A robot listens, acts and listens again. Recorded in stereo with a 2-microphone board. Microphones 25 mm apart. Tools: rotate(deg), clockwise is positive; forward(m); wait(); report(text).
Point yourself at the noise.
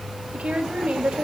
rotate(55)
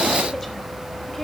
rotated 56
wait()
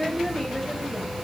rotate(-15)
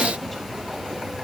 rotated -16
wait()
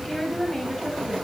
rotate(-15)
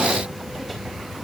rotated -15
wait()
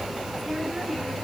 report("Found it: a woman speaking, straight ahead, over 4 m away.")